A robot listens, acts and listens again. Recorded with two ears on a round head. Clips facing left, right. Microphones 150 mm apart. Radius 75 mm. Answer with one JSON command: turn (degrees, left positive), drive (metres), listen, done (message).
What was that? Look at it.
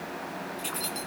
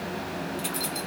{"turn": -30}
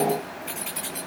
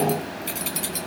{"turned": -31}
{"turn": -130}
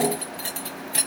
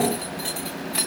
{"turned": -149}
{"turn": 30}
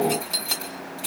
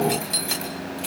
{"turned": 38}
{"done": "Found it: keys jangling, straight ahead, 2 to 4 m away."}